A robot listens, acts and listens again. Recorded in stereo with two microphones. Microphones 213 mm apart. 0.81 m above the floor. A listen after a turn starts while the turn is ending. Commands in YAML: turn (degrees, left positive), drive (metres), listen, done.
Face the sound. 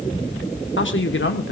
turn: 65
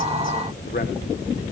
listen: true
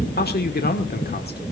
turn: 50
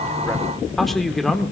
done: "Found it: a man speaking, straight ahead."